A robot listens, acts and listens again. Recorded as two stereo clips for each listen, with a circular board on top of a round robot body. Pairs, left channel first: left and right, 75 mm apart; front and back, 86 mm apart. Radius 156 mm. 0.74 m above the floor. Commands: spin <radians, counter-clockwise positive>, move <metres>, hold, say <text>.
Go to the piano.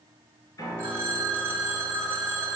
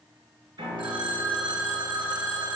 spin 2.44
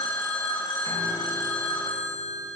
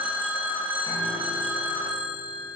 hold
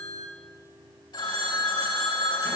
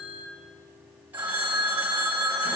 spin 0.61
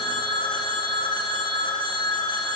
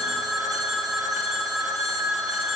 hold
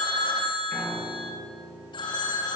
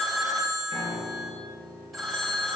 spin 0.26
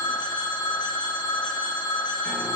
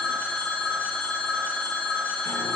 hold
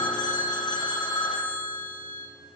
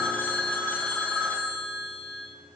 hold
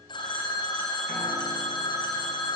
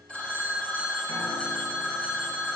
say I heard a piano from this way, but can't make it out now. I did not reach it.